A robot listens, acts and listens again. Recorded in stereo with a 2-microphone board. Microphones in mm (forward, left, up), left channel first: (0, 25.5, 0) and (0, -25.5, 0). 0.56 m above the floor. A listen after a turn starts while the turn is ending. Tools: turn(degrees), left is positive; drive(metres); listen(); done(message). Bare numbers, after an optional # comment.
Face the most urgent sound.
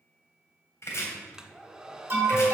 # The alarm: about 40° right or 140° right.
turn(-40)
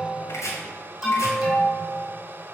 # So it is at 10° right.
turn(-10)
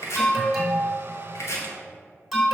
done("Found it: an alarm, straight ahead.")